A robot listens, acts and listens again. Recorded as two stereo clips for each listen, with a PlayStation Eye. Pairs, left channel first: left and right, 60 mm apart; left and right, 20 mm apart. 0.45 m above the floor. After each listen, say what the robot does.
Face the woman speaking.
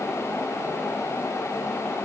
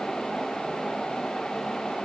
Keep listening.
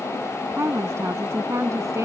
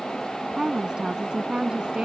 Turn 55° right.
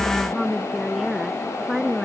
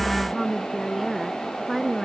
Facing the woman speaking.